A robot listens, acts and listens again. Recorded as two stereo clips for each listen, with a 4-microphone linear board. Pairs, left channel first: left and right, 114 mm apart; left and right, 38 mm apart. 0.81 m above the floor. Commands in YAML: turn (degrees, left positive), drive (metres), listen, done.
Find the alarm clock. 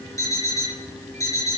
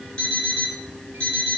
turn: 30
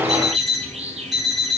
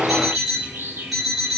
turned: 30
done: "Found it: an alarm clock, straight ahead, over 4 m away."